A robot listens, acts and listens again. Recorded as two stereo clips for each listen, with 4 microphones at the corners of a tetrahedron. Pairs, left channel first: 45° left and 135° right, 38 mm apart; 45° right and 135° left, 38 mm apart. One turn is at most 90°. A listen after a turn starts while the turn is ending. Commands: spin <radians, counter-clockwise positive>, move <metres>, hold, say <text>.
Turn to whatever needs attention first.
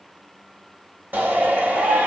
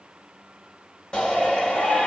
spin -1.57
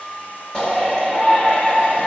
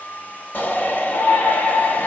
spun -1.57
spin -0.44
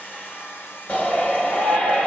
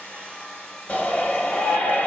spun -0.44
say Found it: a shout, straight ahead.